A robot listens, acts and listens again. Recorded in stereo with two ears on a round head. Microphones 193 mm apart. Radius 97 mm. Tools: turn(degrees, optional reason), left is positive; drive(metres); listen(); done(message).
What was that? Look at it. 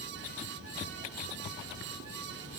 listen()
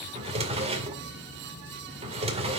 turn(degrees=-30, reason="The drawer: about 30° right or 150° right.")
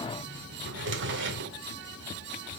turn(degrees=-120, reason="So it is at 120° right.")
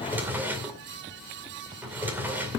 turn(degrees=-10, reason="The drawer is now 10° right.")
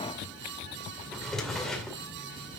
done("Found it: a drawer, straight ahead.")